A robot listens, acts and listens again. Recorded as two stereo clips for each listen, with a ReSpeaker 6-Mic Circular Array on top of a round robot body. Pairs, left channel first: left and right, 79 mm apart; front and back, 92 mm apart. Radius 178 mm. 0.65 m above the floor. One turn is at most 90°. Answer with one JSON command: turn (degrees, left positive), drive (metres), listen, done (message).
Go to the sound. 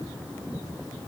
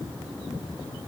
{"listen": true}
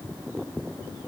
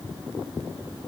{"listen": true}
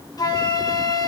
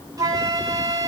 {"turn": 90}
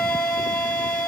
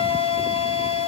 {"turn": 10}
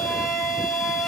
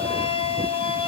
{"drive": 1.0}
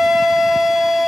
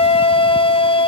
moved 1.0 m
{"drive": 1.0}
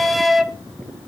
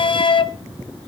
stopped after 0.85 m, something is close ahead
{"done": "Arrived at the flute, straight ahead."}